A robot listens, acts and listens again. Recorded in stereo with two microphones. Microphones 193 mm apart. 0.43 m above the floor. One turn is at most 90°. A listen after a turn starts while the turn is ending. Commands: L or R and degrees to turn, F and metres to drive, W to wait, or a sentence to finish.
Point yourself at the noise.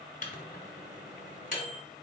L45
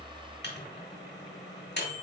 L85
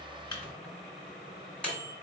Found it: a microwave, straight ahead, 1 to 2 m away.